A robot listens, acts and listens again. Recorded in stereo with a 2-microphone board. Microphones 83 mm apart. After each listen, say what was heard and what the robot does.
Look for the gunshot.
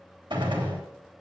The gunshot: about 70° right or 110° right. Turn 70° right.
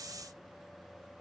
Keep listening.
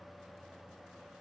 I heard a gunshot, but can't make it out now. It was about straight ahead or 40° right.